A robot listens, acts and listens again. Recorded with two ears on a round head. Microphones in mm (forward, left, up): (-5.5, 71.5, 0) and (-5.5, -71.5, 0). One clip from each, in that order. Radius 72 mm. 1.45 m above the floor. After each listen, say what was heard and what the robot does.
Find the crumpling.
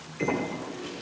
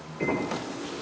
Turn 30° left.
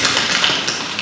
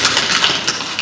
So it is at 20° right. Turn 20° right.
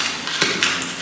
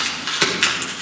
Found it: crumpling, straight ahead.